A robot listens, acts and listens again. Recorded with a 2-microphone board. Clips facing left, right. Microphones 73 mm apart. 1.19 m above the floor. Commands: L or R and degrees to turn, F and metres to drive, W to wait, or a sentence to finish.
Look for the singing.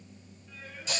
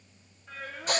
R75
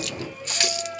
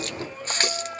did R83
R40
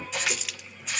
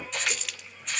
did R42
W
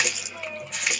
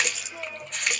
R10
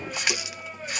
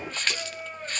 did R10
Found it: singing, straight ahead.